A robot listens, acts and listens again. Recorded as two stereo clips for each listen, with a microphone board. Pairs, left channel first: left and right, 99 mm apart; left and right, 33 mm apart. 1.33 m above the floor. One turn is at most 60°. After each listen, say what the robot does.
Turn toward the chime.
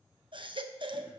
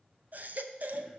Keep listening.
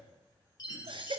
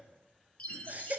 Turn 40° left.
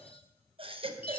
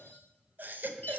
Keep listening.
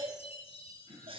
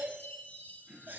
Turn 60° left.
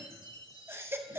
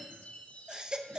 Turn 45° left.
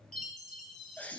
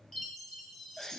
Found it: a chime, straight ahead, 1 to 2 m away.